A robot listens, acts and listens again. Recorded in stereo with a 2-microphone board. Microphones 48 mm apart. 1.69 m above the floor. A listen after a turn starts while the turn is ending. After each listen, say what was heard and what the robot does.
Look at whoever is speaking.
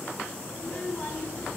The child speaking: about 25° left or 155° left. Turn 25° left.
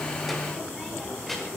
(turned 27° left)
Found it: a child speaking, straight ahead, over 4 m away.